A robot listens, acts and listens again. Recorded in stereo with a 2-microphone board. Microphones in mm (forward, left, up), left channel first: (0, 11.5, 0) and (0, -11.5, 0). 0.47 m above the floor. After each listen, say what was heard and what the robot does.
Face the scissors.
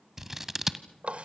The scissors: about 20° right or 160° right. Turn 20° right.
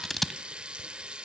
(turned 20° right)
Facing the scissors, 1 to 2 m away.